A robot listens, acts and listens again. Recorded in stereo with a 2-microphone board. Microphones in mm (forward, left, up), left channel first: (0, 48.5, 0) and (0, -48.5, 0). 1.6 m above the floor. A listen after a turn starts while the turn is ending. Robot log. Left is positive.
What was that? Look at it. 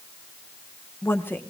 note: The woman speaking: about 20° left or 160° left.
cmd yaw +20
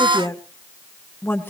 note: The woman speaking: about 20° left or 160° left.
cmd yaw +20
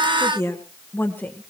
note: The woman speaking: about 20° left or 160° left.
cmd yaw +20
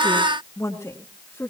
note: The woman speaking: about 25° left or 155° left.
cmd yaw +25
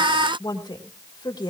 note: So it is at 135° left.
cmd yaw +135
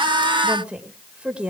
note: The woman speaking is now 10° right.
cmd yaw -10
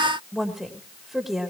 end: Facing the woman speaking.